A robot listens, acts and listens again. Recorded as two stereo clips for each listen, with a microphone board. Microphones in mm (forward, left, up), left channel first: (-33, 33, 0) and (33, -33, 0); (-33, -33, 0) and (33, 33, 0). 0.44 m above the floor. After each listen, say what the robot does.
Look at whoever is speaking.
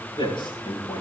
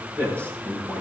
Turn 110° left.
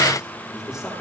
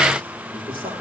Turn 40° left.
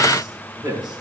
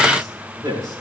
Found it: a man speaking, straight ahead, over 4 m away.